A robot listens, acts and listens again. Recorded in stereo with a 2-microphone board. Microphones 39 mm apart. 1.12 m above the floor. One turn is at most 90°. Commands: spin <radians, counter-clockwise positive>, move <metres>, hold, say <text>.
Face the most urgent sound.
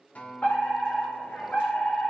spin 0.70
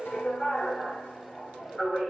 say Facing the fire alarm, over 4 m away.